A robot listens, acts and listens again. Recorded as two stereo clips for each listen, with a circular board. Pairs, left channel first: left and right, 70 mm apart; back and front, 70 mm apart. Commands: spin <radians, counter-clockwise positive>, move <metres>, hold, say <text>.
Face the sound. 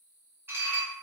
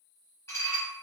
spin -2.44
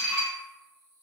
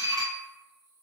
spin -0.35
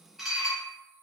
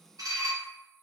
say Facing the dishes clattering, under 1 m away.